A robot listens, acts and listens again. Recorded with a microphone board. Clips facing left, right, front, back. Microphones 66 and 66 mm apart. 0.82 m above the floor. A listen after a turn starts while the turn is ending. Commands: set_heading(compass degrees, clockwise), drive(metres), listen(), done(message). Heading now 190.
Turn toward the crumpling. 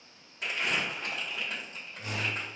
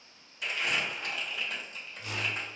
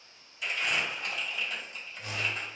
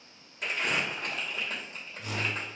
set_heading(55)
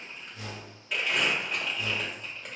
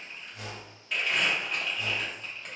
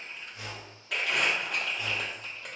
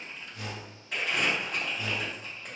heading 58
done("Found it: crumpling, straight ahead, under 1 m away.")